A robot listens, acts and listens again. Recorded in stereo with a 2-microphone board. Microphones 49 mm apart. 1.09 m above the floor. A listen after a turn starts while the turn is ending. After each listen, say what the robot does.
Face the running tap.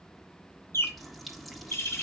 Turn 30° left.
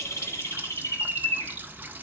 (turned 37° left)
Turn 35° right.
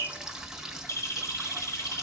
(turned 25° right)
Turn 10° right.
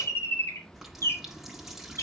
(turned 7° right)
Found it: a running tap, straight ahead, 1 to 2 m away.